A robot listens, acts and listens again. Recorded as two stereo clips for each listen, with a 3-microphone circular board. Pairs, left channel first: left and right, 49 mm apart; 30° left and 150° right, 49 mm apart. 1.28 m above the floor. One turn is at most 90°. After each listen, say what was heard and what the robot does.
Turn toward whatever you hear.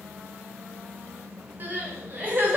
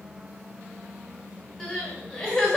The crying: 45° right. Turn 45° right.
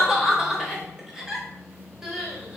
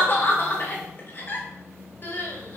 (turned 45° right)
The crying is now 10° right. Turn 10° right.
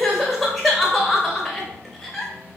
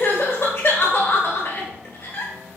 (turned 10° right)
Found it: crying, straight ahead.